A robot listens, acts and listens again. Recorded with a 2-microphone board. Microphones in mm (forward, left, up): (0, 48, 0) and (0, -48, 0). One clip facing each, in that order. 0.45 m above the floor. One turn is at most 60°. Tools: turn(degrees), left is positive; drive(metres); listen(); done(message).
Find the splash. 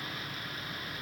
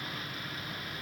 listen()
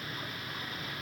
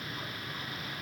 listen()
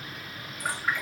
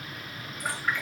turn(degrees=30)
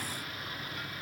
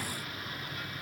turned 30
listen()
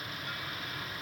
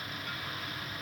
done("I heard a splash, but can't make it out now. It was about 15° right or 135° left.")